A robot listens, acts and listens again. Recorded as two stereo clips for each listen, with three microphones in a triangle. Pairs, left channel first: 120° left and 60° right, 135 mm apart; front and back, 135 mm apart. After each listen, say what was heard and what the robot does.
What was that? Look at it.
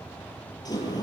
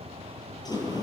The sliding door: 60° left. Turn 60° left.
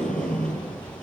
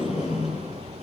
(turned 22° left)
The sliding door is now 35° left. Turn 35° left.
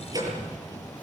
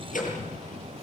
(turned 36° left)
Facing the sliding door, over 4 m away.